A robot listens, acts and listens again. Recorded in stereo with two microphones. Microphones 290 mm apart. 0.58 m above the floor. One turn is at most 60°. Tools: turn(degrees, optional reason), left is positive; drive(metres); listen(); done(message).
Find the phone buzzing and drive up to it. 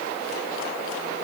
listen()
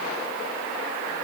listen()
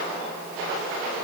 done("I can't make out a phone buzzing.")